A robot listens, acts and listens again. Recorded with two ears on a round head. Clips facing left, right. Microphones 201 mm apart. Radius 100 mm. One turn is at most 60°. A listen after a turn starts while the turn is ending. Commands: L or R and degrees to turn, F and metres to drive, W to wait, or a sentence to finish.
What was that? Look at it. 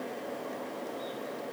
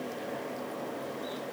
W
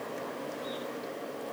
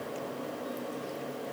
W
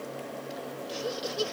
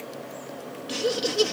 R60
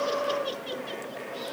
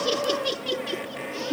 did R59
R60
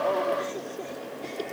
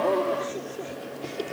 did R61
R10
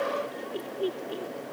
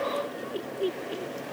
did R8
Found it: laughter, straight ahead.